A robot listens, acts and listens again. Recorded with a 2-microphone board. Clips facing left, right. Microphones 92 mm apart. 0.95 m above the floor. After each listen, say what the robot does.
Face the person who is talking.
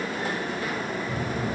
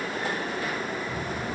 Turn 90° left.
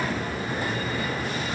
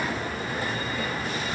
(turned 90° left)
Found it: a child speaking, straight ahead.